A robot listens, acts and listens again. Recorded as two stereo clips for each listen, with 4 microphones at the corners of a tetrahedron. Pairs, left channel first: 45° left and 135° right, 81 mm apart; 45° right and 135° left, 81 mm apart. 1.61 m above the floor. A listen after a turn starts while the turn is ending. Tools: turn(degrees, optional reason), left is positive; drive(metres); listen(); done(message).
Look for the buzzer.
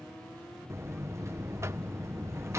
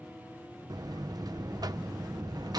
turn(degrees=170, reason="The buzzer: 170° left.")
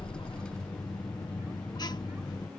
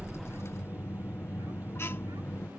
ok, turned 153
turn(degrees=15, reason="The buzzer is now 15° left.")
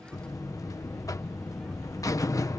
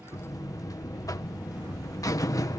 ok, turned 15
done("Facing the buzzer.")